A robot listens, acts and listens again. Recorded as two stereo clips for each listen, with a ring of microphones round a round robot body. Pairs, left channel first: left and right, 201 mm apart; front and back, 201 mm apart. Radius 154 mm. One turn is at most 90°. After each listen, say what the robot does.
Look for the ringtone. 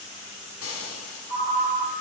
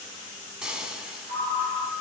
Turn 90° right.
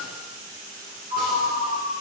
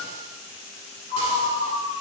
Turn 85° right.
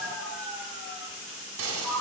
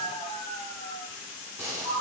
Found it: a ringtone, straight ahead.